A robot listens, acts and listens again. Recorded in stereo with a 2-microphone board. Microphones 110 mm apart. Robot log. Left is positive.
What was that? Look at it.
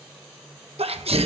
note: The sneeze: about 60° right or 120° right.
cmd yaw -60
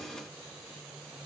cmd idle
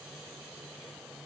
end: I heard a sneeze, but can't make it out now. It was about straight ahead or 60° right.